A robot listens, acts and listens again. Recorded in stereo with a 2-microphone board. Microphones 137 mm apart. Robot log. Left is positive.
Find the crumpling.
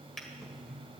cmd idle
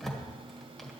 cmd idle
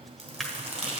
note: The crumpling: about 55° right or 125° right.
cmd yaw -55
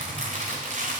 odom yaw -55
note: So it is at 70° right.
cmd yaw -70
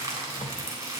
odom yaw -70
note: The crumpling is now 20° right.
cmd yaw -20
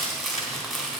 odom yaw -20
end: Facing the crumpling, 2 to 4 m away.